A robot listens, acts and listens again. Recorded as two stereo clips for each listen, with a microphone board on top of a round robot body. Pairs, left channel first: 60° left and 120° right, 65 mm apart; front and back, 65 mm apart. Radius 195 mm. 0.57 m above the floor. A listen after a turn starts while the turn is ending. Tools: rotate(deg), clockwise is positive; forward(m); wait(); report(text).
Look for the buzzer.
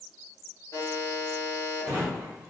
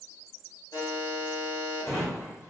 rotate(-20)
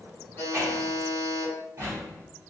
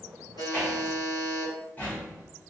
report("Facing the buzzer.")